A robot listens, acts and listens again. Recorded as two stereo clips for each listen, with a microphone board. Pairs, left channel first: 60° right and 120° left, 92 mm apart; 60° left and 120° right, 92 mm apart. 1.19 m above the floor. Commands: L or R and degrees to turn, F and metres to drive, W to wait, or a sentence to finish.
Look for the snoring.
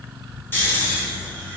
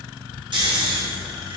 R125
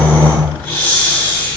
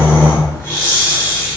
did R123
Facing the snoring, 1 to 2 m away.